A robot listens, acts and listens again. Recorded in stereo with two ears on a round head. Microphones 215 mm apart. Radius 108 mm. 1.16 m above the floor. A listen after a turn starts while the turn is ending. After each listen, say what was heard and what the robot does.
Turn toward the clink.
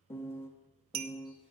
The clink: about 75° right or 105° right. Turn 75° right.
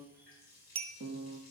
So it is at 25° right. Turn 25° right.
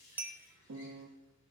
Keep listening.
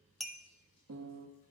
Facing the clink.